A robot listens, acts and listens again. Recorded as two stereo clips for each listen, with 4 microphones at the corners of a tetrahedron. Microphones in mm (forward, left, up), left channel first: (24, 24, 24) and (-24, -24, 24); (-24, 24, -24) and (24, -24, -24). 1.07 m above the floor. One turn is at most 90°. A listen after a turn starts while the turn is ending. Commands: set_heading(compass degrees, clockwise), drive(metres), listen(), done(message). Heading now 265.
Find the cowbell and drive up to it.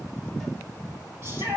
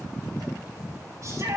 listen()
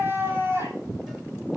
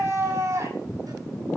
listen()
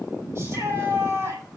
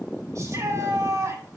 done("I can't make out a cowbell, only a shout.")